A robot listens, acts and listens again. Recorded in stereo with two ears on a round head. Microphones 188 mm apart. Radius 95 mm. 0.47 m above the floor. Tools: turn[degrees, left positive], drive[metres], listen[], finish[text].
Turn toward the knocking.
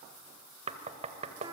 Thought: The knocking: about 30° right or 150° right.
Action: turn[-30]
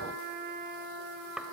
Action: finish[Found it: knocking, straight ahead.]